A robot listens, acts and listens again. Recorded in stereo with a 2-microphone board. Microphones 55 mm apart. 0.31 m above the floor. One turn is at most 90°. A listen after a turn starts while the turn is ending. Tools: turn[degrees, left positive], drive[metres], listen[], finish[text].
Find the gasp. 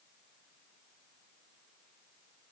Action: listen[]
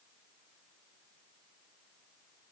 Action: listen[]
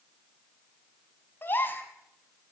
Thought: The gasp: about 40° left or 140° left.
Action: turn[40]
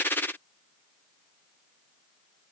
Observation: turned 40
Action: listen[]
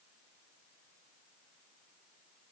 Action: finish[I heard a gasp, but can't make it out now. It was about straight ahead or 100° left.]